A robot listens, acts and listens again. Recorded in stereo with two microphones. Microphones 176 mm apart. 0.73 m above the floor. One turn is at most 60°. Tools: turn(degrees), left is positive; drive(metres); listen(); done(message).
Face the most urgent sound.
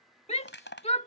turn(degrees=35)
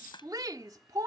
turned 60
turn(degrees=-20)
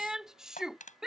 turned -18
done("Found it: a shout, straight ahead.")